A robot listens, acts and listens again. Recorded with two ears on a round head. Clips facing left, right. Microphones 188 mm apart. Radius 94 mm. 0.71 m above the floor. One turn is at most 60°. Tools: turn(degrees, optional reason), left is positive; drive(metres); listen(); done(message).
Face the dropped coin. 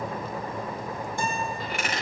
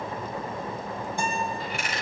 turn(degrees=55, reason="The dropped coin: about 55° left or 125° left.")
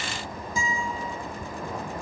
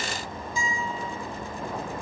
listen()
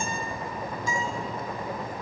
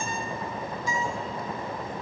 done("I heard a dropped coin, but can't make it out now. It was about straight ahead or 70° left.")